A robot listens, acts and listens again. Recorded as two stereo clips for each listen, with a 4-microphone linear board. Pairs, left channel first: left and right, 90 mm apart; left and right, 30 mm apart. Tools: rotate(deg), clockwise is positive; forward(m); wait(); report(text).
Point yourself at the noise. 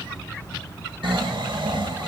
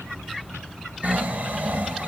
rotate(65)
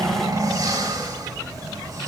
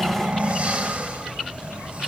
rotate(45)
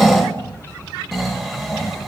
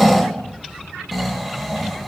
report("Facing the snoring.")